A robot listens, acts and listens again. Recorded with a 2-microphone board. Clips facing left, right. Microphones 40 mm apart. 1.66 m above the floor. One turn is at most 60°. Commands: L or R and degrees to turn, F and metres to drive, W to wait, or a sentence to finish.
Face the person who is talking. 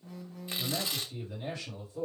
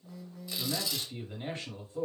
R40
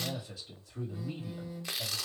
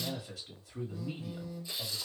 R60
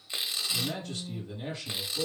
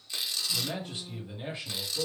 R20
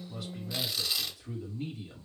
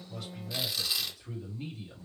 Facing the man speaking, 2 to 4 m away.